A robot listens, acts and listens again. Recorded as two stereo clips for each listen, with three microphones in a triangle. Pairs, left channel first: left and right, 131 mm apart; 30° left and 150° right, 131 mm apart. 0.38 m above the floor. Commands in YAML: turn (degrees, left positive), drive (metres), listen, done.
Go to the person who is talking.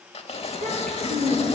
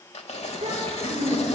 turn: -105
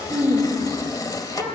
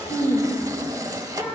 turn: -10
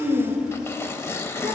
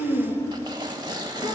drive: 1.0
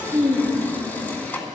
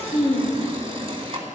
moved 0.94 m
turn: -10
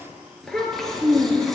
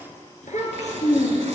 drive: 1.0
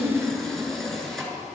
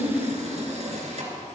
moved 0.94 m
drive: 1.0
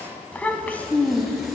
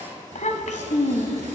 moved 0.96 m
turn: 10
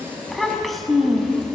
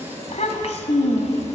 drive: 1.0
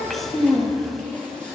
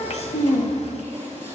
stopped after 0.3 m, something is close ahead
done: "I am next to the child speaking."